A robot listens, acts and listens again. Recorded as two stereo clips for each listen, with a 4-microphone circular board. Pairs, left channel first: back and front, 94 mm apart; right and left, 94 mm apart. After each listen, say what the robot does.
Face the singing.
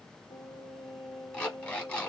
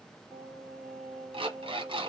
Turn 165° left.
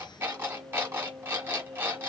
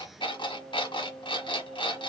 Facing the singing.